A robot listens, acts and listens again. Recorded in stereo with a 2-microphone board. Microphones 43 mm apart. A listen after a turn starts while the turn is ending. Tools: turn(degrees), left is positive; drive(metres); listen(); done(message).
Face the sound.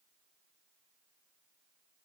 listen()
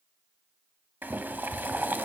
turn(degrees=-50)
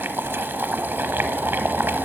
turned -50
turn(degrees=-70)
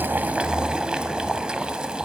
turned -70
turn(degrees=-25)
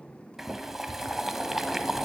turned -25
turn(degrees=-10)
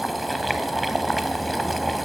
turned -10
done("Found it: boiling, straight ahead.")